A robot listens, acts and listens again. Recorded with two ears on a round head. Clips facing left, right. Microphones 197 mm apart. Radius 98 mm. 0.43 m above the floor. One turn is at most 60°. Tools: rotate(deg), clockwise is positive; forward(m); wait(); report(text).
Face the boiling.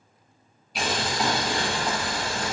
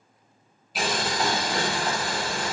rotate(-30)
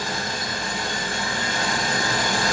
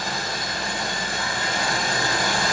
rotate(35)
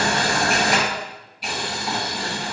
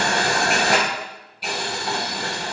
report("Facing the boiling.")